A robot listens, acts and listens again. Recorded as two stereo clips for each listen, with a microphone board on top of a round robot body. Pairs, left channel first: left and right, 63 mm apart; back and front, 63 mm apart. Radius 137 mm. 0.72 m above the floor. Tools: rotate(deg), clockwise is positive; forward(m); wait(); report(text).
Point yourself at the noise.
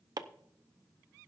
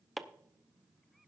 rotate(90)
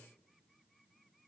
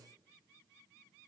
wait()
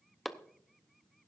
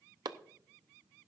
report("Facing the chopping, under 1 m away.")